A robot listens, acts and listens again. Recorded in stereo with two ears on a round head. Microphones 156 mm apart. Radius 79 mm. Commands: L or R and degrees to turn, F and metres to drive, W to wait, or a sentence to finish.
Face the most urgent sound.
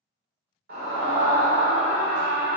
R55
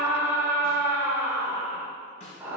R15
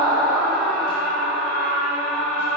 Facing the scream.